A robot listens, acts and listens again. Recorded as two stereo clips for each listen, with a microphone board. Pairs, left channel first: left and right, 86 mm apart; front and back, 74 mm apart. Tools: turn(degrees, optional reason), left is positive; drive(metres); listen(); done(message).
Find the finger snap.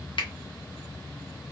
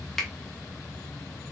turn(degrees=85, reason="The finger snap: 85° left.")
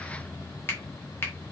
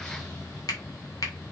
turn(degrees=30, reason="The finger snap is now 30° left.")
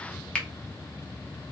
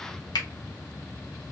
turn(degrees=10, reason="The finger snap is now 10° left.")
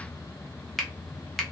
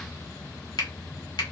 done("Facing the finger snap.")